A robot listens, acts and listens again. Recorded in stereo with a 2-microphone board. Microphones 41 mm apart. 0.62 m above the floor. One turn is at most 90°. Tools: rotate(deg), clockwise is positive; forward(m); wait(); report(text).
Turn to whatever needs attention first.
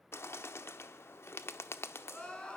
rotate(-25)
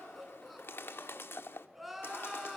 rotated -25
report("Found it: crying, straight ahead, 2 to 4 m away.")